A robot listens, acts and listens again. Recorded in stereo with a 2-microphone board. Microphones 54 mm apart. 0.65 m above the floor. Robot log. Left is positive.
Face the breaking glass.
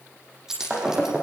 cmd yaw -30
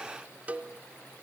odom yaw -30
cmd idle
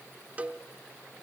end: I heard breaking glass, but can't make it out now. It was about 20° left or 140° right.